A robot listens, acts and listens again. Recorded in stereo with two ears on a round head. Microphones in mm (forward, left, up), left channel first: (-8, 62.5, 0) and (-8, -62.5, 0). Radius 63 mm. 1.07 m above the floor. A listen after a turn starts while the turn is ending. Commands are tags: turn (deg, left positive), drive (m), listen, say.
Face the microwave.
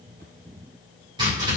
<listen/>
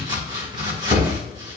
<listen/>
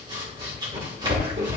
<say>I can't make out a microwave to turn to.</say>